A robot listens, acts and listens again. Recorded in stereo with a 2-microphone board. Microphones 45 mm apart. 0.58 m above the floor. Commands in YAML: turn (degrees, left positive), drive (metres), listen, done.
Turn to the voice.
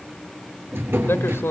turn: 65
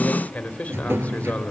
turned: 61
turn: 35
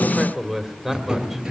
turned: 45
turn: -10
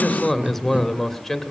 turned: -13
done: "Facing the man speaking."